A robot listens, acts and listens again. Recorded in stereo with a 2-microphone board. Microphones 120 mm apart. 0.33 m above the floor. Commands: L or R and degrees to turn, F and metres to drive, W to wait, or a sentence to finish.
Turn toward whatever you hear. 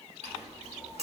R60
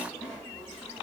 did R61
R15
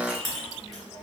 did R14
Found it: a clink, straight ahead.